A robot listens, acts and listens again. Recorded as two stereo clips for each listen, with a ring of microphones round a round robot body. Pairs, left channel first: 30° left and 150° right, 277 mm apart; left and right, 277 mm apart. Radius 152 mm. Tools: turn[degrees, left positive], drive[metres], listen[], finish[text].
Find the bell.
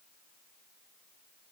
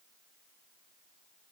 Action: listen[]
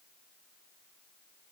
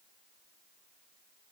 Action: listen[]
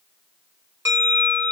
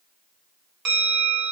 Thought: The bell: 70° right.
Action: turn[-70]
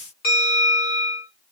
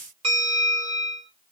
Thought: The bell is now 25° right.
Action: turn[-25]
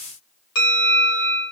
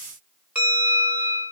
Action: finish[Facing the bell, 1 to 2 m away.]